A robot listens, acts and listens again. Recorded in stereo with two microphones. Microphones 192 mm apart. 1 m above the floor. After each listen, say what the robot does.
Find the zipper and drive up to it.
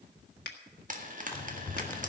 Turn 30° left.
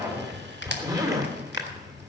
Turn 20° right.
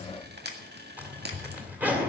Turn 10° right.
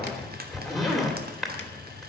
Drive 1.0 m forward.
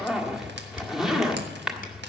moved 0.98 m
Drive 1.0 m forward.
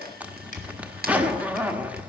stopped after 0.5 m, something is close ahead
Turn 10° right.
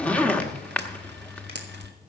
I am next to the zipper.